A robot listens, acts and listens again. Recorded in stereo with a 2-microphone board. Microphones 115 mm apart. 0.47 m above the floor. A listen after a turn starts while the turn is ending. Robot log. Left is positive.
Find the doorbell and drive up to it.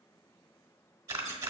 cmd idle
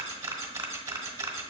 cmd idle
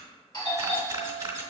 note: The doorbell: about 40° left or 140° left.
cmd yaw +40
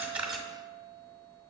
cmd idle
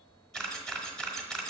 cmd idle
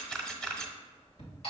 note: So it is at 90° left.
cmd yaw +90
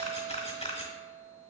cmd idle
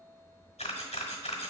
cmd idle
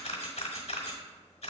end: Facing where the doorbell came from. I can't hear it now. I did not reach it.